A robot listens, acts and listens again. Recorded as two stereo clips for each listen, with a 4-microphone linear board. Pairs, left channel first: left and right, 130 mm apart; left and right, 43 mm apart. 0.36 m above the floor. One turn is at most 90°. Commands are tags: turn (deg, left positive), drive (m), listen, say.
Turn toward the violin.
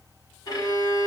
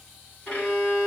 <turn deg="30"/>
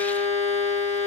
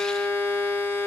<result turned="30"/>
<turn deg="90"/>
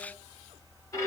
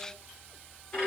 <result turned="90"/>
<turn deg="25"/>
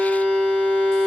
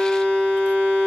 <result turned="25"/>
<turn deg="10"/>
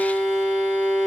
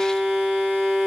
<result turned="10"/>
<say>Found it: a violin, straight ahead.</say>